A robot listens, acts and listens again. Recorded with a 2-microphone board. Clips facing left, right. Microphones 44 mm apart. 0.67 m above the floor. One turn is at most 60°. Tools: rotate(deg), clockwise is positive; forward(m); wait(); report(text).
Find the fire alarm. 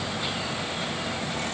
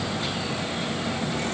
wait()
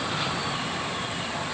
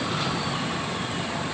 wait()
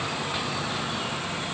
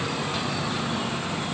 report("I can't make out a fire alarm.")